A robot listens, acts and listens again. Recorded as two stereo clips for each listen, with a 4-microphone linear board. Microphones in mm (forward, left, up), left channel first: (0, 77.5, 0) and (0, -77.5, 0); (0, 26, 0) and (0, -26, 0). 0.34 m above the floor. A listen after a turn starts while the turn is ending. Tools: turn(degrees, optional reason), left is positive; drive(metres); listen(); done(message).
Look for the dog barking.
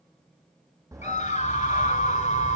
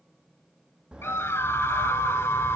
turn(degrees=-25, reason="The dog barking: about 25° right or 155° right.")
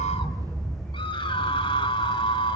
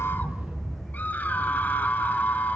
done("Found it: a dog barking, straight ahead, over 4 m away.")